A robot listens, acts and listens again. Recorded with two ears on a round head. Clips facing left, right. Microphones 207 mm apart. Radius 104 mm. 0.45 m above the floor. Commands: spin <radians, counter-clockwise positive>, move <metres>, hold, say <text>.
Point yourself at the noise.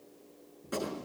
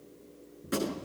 spin -0.44
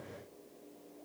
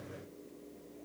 hold
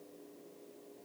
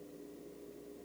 say I heard a gunshot, but can't make it out now. It was about straight ahead or 130° right.